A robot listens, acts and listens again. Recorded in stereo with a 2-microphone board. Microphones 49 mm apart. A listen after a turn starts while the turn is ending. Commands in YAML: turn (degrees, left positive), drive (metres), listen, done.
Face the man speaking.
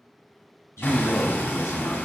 turn: 70
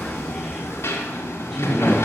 turn: -15
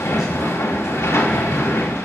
listen: true
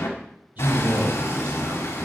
turn: -40
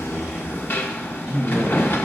done: "Found it: a man speaking, straight ahead."